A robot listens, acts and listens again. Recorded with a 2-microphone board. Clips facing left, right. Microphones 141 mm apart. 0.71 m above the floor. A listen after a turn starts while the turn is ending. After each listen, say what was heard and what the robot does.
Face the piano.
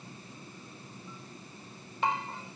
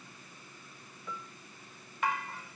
Turn 90° right.
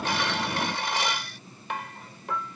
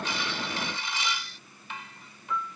Facing the piano.